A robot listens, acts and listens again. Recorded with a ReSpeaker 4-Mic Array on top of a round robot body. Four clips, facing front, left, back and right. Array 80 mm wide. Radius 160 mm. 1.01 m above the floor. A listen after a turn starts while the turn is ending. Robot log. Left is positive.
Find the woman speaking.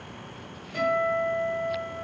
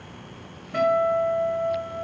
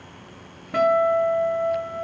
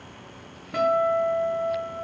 cmd idle
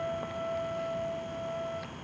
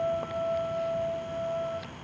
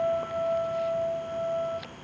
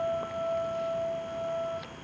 cmd idle
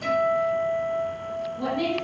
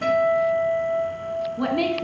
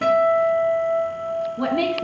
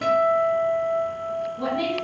note: The woman speaking: 150° left.
cmd yaw +150
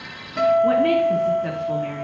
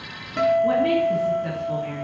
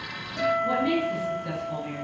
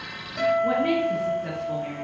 note: The woman speaking is now 10° left.
cmd yaw +10
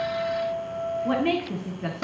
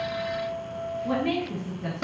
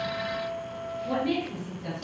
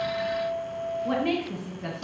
end: Facing the woman speaking.